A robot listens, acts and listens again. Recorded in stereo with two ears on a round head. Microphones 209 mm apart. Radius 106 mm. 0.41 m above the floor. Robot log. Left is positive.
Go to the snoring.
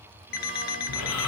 cmd yaw +90
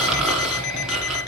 cmd fwd 1.0
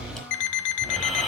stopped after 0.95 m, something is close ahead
end: I am next to the snoring.